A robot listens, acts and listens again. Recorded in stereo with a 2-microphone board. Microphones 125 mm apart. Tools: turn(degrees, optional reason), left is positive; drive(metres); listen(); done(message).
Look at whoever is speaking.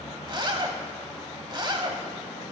listen()
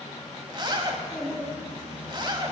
turn(degrees=-30)
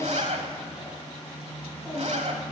listen()
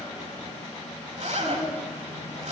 turn(degrees=20, reason="So it is at 20° left.")
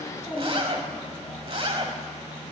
done("Found it: a child speaking, straight ahead.")